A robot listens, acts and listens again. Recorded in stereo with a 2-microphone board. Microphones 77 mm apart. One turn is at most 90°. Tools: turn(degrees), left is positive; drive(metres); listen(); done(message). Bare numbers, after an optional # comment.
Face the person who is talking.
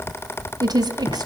# The woman speaking: about 60° right or 120° right.
turn(-60)
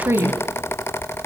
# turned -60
# So it is at 35° right.
turn(-35)
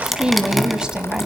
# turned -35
# The woman speaking is now 15° right.
turn(-15)
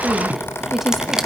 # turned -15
listen()
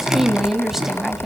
done("Found it: a woman speaking, straight ahead, 1 to 2 m away.")